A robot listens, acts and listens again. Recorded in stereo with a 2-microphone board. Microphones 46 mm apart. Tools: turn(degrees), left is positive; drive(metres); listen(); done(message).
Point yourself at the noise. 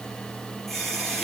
turn(degrees=30)
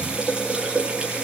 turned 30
turn(degrees=-25)
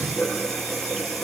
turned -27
done("Found it: a running tap, straight ahead, over 4 m away.")